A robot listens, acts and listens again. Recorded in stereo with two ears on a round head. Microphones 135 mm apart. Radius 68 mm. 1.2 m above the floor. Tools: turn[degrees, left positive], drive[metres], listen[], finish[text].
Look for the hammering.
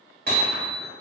Thought: The hammering: about 65° right or 115° right.
Action: turn[-65]
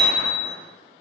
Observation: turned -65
Thought: So it is at 10° right.
Action: turn[-10]
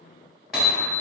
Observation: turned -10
Action: finish[Facing the hammering.]